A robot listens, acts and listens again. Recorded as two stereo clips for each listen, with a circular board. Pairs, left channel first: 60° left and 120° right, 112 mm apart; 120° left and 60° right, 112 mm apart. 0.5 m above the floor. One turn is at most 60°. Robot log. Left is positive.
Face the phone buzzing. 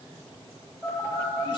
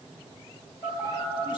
note: The phone buzzing: 165° left.
cmd yaw +60
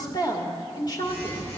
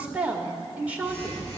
note: The phone buzzing is now 90° left.
cmd yaw +60
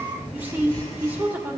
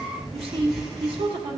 note: The phone buzzing is now 25° left.
cmd yaw +25
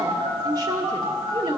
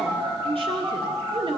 end: Facing the phone buzzing, 2 to 4 m away.